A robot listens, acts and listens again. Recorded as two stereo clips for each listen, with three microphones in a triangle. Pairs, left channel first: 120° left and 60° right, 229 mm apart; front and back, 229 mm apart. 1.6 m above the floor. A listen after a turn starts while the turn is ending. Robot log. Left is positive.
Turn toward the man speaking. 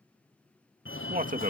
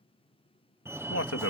end: Found it: a man speaking, straight ahead.